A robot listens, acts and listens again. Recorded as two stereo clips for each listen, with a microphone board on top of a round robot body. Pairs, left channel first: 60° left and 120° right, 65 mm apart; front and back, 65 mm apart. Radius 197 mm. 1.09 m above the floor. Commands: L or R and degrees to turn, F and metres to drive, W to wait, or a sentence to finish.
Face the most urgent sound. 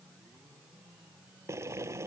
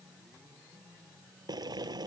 W
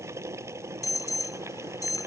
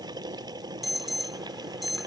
L90
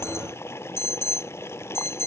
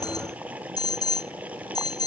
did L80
L10
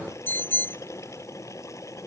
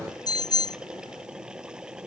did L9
Facing the alarm.